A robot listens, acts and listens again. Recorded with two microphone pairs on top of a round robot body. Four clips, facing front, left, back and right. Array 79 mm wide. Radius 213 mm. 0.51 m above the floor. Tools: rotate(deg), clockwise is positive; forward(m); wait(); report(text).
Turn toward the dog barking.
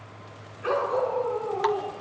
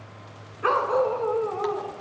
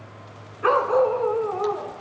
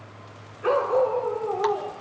rotate(-145)
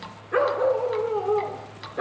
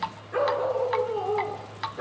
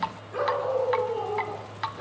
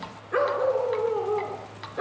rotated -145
rotate(35)
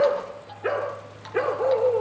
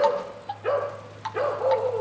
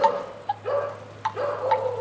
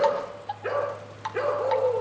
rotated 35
report("Facing the dog barking, over 4 m away.")